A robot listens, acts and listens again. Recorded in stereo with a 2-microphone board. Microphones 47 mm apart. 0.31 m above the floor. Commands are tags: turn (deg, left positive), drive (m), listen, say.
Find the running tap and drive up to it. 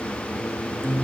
<listen/>
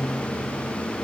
<listen/>
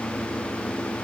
<say>I can't make out a running tap, only a guitar.</say>